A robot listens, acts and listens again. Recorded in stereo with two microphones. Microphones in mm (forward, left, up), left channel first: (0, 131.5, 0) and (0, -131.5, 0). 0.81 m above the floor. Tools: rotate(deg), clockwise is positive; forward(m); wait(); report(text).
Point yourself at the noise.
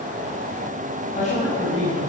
rotate(-25)
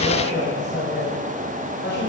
rotate(-40)
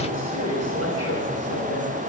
rotate(-110)
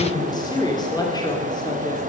rotate(-15)
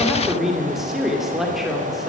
report("Facing the woman speaking, 2 to 4 m away.")